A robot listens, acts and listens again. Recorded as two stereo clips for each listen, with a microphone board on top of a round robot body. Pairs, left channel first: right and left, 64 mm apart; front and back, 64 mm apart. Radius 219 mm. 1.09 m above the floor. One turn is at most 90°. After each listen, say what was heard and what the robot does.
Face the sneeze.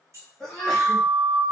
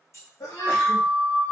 Found it: a sneeze, straight ahead.